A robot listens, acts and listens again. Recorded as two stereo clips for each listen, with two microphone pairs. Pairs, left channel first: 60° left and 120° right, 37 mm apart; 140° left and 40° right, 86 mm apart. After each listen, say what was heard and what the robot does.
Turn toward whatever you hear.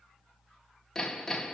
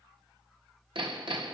The hammering: 25° right. Turn 25° right.
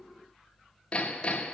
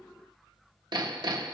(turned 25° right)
The hammering is now 10° right. Turn 10° right.
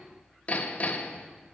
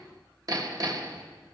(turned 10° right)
Facing the hammering, 1 to 2 m away.